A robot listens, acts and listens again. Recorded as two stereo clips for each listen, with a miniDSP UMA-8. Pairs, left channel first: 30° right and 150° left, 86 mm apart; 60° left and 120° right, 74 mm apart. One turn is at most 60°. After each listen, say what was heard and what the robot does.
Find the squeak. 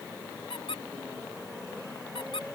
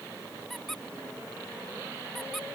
The squeak: 25° right. Turn 25° right.
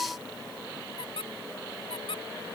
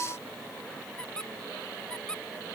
The squeak is now 20° right. Turn 20° right.
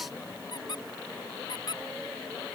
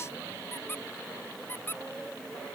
Found it: a squeak, straight ahead.